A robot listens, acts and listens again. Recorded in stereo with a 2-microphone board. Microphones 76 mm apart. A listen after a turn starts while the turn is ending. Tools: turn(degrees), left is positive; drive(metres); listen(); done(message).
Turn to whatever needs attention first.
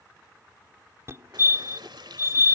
turn(degrees=-35)
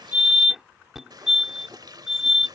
done("Facing the fire alarm.")